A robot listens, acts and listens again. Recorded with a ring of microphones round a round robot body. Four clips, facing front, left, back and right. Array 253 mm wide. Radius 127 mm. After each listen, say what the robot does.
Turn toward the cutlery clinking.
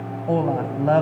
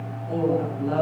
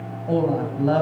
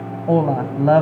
Keep listening.
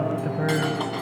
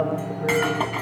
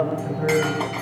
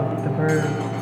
Turn 105° left.
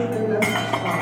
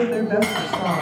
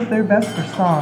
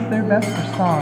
Turn 30° left.
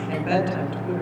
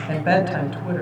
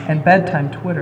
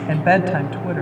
Keep listening.
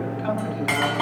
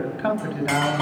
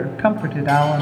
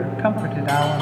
Turn 20° left.
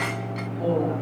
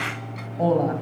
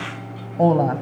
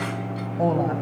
Keep listening.
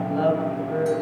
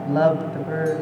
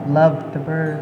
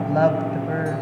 Keep listening.
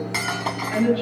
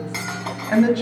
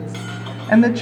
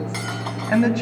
Facing the cutlery clinking.